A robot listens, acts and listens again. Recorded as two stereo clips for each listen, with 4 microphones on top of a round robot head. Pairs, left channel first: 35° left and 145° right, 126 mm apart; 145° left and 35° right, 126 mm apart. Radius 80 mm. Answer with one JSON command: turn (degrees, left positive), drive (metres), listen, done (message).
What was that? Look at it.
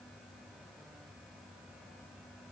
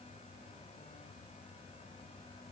{"listen": true}
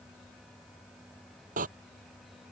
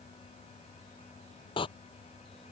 {"turn": -165}
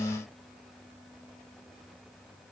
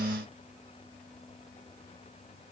{"done": "Facing where the door slam came from. I can't hear it now."}